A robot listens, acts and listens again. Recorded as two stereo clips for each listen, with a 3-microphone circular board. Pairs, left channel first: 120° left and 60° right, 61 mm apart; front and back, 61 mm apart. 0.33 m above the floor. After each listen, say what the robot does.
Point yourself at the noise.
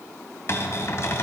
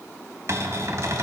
Turn 155° left.
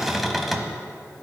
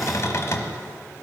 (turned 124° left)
Turn 30° left.
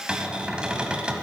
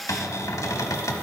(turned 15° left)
Turn 15° left.
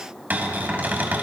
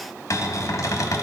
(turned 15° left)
Found it: a cupboard door, straight ahead.